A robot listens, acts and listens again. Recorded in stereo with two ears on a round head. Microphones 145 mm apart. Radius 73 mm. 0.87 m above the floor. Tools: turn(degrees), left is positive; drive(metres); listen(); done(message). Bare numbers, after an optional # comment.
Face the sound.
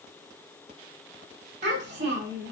# The child speaking: about 45° right or 135° right.
turn(-45)
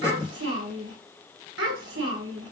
# So it is at 90° right.
turn(-90)
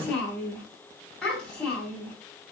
done("Found it: a child speaking, straight ahead, over 4 m away.")